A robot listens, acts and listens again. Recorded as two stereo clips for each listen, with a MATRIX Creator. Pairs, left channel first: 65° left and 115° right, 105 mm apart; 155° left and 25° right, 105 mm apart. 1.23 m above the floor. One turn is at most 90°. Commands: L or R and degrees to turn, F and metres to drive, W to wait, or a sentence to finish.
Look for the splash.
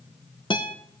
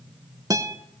W
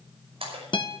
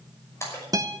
R90
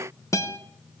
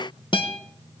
R50
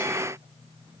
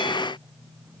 I heard a splash from this way, but can't make it out now.